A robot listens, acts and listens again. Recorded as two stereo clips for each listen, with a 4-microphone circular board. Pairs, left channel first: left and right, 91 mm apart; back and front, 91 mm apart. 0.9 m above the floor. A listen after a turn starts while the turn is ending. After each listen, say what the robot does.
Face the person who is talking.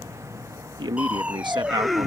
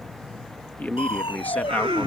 Turn 110° right.
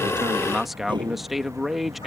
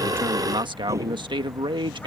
Facing the man speaking.